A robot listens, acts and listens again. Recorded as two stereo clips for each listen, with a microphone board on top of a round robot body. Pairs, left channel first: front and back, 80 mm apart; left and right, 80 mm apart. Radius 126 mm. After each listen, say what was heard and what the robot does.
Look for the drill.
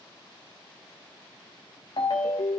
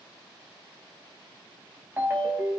Keep listening.
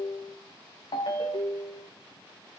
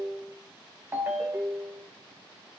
Keep listening.
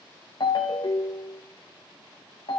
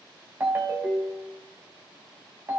I can't make out a drill to turn to.